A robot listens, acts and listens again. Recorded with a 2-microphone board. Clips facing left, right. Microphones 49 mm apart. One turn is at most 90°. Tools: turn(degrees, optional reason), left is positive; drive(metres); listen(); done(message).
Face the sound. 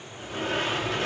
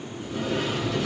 turn(degrees=50, reason="The sliding door: about 50° left or 130° left.")
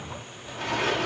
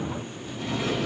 turn(degrees=80, reason="So it is at 80° left.")
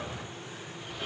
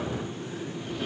done("Facing the sliding door, 1 to 2 m away.")